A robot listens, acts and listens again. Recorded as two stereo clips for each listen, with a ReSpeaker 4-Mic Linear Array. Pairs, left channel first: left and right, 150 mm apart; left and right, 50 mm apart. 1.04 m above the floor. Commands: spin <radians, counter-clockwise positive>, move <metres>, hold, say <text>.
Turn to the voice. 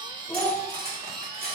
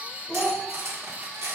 spin 0.35
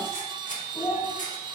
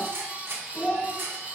spin 2.44
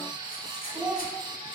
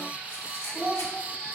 spin -0.26
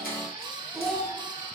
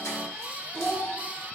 say Facing the child speaking, 2 to 4 m away.